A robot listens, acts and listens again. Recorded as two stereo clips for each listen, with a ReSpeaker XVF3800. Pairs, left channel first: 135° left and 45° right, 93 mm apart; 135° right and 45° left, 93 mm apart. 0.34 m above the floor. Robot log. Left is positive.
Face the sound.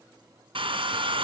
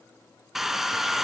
note: The hair dryer: 40° right.
cmd yaw -40
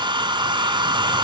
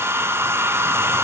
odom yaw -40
note: The hair dryer is now 15° right.
cmd yaw -15
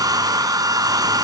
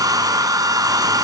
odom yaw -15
end: Facing the hair dryer, 1 to 2 m away.